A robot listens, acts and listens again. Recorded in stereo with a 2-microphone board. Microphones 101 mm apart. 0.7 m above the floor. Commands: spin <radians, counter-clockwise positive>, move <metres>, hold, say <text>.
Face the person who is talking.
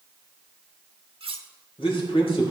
spin 1.22
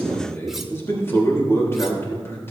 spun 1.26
spin 0.52
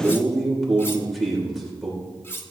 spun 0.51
say Found it: a man speaking, straight ahead, 2 to 4 m away.